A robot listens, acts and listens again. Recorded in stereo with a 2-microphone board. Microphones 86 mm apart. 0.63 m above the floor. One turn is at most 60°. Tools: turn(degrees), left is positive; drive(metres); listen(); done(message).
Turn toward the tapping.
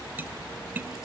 turn(degrees=-20)
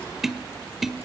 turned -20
done("Facing the tapping, 1 to 2 m away.")